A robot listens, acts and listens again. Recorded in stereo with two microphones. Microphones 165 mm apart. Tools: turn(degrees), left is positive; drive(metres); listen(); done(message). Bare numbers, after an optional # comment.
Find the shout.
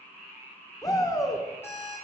# The shout: about 20° left or 160° left.
turn(20)
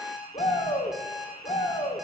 # So it is at 135° left.
turn(135)
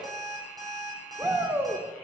# The shout is now 15° right.
turn(-15)
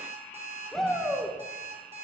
done("Facing the shout, 1 to 2 m away.")